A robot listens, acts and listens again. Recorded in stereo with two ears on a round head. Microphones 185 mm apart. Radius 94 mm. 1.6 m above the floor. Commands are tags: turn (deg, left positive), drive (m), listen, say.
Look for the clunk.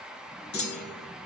<turn deg="55"/>
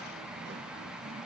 <listen/>
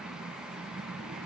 <say>I heard a clunk, but can't make it out now. It was about straight ahead or 70° left.</say>